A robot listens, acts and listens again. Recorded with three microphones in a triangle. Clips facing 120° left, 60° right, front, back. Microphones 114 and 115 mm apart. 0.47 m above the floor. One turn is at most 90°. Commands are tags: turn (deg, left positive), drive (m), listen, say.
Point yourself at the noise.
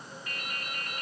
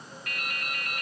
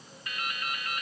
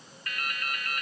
<turn deg="-70"/>
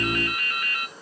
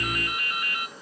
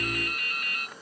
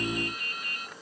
<turn deg="10"/>
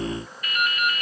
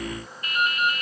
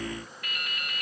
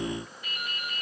<say>Found it: dripping, straight ahead, 1 to 2 m away.</say>